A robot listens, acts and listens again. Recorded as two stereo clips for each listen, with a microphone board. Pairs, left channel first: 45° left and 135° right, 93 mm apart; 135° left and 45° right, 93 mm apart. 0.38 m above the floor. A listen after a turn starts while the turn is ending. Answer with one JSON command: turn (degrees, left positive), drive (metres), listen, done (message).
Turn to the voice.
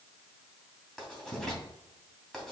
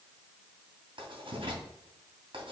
{"listen": true}
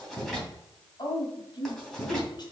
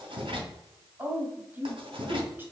{"turn": 20}
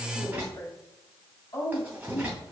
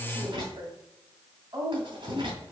{"done": "Found it: a woman speaking, straight ahead."}